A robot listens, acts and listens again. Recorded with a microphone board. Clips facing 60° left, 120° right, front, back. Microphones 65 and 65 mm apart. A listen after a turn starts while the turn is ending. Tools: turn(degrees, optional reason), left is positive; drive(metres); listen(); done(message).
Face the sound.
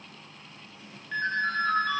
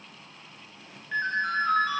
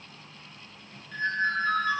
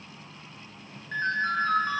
turn(degrees=160, reason="The ringtone: 160° left.")
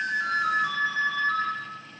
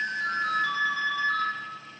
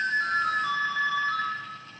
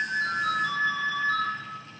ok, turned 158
done("Found it: a ringtone, straight ahead, under 1 m away.")